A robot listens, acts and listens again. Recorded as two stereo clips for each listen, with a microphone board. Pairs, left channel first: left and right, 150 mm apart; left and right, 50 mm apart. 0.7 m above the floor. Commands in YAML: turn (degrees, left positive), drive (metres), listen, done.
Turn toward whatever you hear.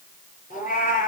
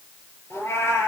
turn: 70
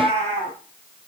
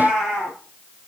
turn: 10
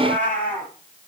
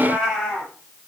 turn: 10
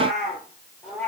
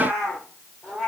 done: "Facing the cat meowing."